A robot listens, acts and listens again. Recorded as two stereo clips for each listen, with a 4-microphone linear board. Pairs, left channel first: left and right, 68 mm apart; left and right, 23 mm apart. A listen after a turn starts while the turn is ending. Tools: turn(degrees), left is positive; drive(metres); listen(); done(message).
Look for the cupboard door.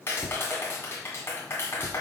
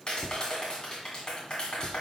turn(degrees=90)
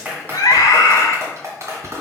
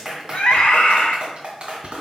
done("Facing the cupboard door.")